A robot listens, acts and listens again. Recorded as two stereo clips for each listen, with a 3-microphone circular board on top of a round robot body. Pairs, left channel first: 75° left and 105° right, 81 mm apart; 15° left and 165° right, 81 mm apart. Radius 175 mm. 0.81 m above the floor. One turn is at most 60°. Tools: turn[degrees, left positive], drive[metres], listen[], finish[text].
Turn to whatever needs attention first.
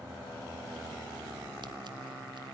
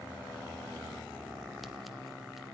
Action: listen[]
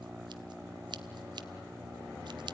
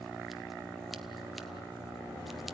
Action: listen[]
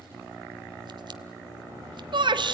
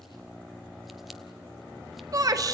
Thought: The shout: 120° right.
Action: turn[-60]
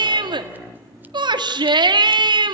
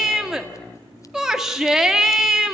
Thought: The shout is now 80° right.
Action: turn[-60]
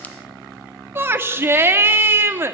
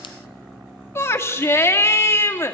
Thought: The shout is now 40° right.
Action: turn[-40]
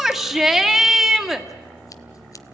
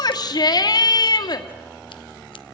Thought: The shout is now 15° right.
Action: turn[-15]
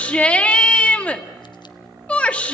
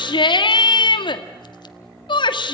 Action: finish[Facing the shout.]